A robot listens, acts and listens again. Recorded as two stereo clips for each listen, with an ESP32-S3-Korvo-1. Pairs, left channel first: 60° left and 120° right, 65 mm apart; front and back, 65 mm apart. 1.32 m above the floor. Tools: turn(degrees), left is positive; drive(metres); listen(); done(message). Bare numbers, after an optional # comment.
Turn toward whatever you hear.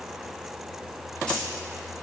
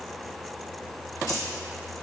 listen()
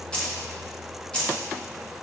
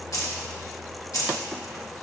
# The keys jangling: 10° right.
turn(-10)
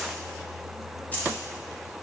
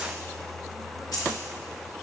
done("Found it: keys jangling, straight ahead, 1 to 2 m away.")